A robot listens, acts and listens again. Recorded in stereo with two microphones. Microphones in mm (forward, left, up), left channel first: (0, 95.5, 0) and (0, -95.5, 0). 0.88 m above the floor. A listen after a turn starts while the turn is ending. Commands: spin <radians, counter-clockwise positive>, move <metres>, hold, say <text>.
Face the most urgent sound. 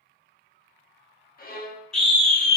spin 0.52
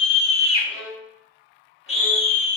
spin 2.53
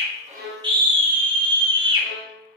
spin -0.44
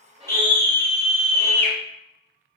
spin 0.26
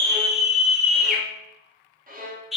say Facing the scream.